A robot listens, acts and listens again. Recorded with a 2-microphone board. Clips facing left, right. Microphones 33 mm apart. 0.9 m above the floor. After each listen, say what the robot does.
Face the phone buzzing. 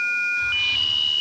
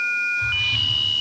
Keep listening.
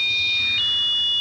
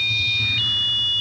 Keep listening.
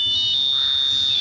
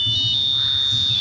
I can't make out a phone buzzing.